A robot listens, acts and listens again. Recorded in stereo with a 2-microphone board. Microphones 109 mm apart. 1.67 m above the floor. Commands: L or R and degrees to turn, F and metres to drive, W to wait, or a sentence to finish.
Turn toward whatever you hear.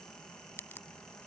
L20
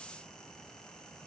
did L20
W
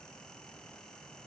I heard a crack, but can't make it out now. It was about straight ahead or 140° left.